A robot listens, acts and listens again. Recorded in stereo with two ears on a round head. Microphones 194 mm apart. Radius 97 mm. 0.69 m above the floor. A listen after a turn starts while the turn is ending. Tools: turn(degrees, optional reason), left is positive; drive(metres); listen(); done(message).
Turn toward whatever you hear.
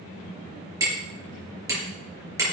turn(degrees=-15, reason="The hammering: about 15° right or 165° right.")
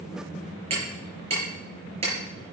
turn(degrees=-150, reason="So it is at 150° right.")
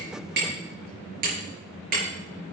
turn(degrees=-40, reason="The hammering is now 40° right.")
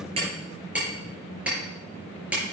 done("Found it: hammering, straight ahead, over 4 m away.")